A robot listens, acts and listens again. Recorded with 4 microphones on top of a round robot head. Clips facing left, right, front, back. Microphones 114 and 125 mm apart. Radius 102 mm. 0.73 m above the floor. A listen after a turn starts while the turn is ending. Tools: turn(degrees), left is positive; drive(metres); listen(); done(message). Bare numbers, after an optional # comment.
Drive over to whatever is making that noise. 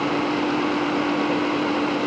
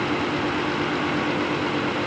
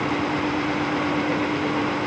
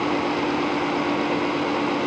listen()
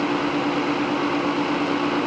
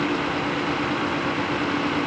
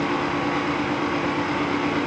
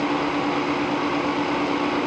listen()
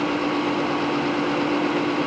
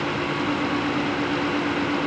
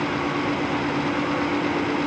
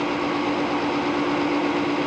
done("I can't make out anything.")